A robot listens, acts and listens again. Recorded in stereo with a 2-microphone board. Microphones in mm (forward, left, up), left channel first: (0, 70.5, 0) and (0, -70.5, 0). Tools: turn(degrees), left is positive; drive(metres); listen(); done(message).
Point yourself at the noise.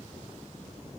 listen()
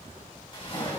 turn(degrees=35)
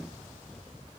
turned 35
listen()
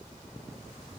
done("I heard a splash, but can't make it out now. It was about straight ahead or 110° left.")